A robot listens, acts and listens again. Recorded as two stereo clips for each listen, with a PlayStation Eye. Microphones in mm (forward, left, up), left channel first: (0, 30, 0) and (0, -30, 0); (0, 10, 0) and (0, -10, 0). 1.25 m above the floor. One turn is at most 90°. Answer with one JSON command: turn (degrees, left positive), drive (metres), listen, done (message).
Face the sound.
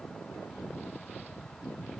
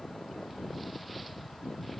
{"listen": true}
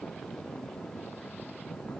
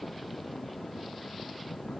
{"listen": true}
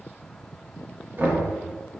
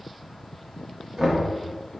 {"turn": -35}
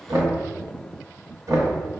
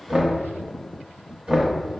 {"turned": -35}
{"turn": -90}
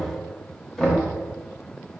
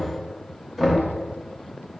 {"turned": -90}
{"turn": 10}
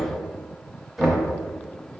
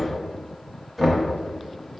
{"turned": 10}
{"done": "Found it: knocking, straight ahead."}